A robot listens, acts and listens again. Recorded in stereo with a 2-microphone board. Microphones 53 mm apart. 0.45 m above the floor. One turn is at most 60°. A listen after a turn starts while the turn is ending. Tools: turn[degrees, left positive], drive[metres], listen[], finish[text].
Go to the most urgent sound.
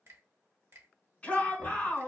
Thought: The shout: about 20° left or 160° left.
Action: turn[20]
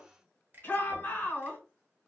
Thought: So it is at 135° left.
Action: turn[60]
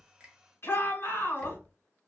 Thought: The shout is now 70° left.
Action: turn[60]
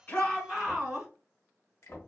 Action: drive[1.0]
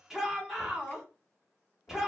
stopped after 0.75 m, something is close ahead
Thought: The shout is now 10° right.
Action: turn[-10]
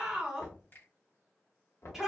Action: finish[I am next to the shout.]